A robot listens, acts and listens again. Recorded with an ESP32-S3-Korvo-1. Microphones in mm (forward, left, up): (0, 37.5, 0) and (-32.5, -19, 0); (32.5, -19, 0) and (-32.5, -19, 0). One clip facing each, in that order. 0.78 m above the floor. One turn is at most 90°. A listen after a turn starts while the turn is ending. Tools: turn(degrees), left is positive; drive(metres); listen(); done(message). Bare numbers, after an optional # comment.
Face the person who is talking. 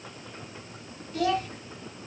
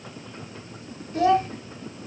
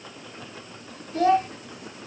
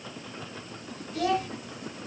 # The child speaking: 60° right.
turn(-60)
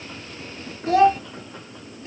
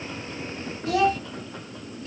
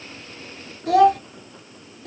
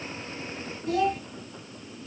done("Found it: a child speaking, straight ahead.")